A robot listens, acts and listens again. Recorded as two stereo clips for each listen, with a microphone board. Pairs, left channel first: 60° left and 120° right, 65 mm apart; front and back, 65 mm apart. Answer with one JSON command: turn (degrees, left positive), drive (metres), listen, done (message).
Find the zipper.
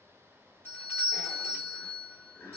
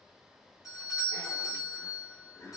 {"turn": 40}
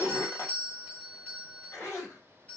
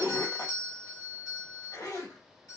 {"turn": 20}
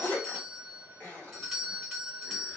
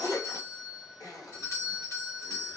{"done": "Facing the zipper, 1 to 2 m away."}